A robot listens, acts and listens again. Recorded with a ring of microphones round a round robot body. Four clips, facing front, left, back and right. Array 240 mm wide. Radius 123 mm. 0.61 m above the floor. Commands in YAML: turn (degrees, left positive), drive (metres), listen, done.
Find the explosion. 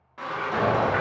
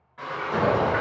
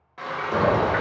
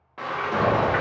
turn: -145
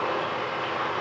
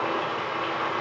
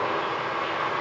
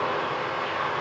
done: "I heard an explosion from this way, but can't make it out now."